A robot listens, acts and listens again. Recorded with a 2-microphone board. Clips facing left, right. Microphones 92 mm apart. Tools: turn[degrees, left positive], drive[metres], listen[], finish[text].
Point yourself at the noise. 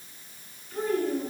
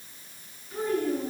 Action: turn[-30]
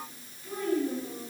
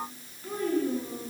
Thought: So it is at 130° right.
Action: turn[-130]
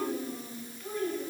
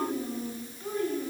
Thought: The child speaking is now 25° right.
Action: turn[-25]
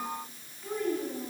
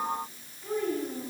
Action: finish[Found it: a child speaking, straight ahead, over 4 m away.]